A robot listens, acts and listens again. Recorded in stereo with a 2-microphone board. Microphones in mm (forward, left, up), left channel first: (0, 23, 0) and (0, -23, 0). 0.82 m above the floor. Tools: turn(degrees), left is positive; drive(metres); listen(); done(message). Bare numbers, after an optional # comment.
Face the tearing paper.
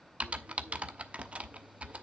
listen()
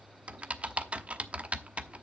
listen()
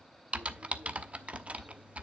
done("I can't make out tearing paper, only typing on a keyboard.")